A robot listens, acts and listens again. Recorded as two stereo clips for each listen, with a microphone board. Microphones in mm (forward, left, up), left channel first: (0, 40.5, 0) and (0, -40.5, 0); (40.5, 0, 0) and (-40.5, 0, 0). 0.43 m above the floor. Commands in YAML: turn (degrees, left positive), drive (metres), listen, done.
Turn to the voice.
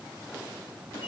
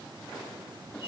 listen: true
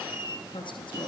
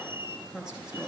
turn: 95
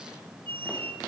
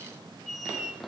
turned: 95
listen: true
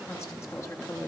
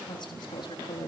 turn: 30
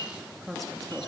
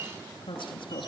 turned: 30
done: "Found it: a woman speaking, straight ahead, over 4 m away."